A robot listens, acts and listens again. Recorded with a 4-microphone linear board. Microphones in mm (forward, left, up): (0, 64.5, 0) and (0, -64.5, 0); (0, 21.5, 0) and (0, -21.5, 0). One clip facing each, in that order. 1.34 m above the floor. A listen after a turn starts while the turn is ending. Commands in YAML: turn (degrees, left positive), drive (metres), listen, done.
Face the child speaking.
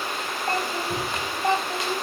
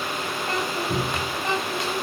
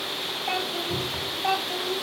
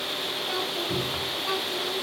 turn: 40
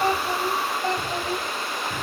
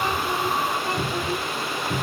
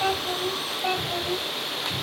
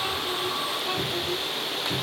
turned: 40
turn: 110
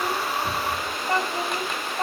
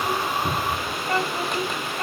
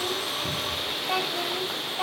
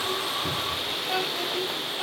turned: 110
turn: 25
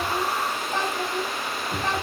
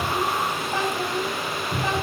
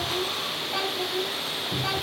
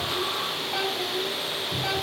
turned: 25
done: "Found it: a child speaking, straight ahead."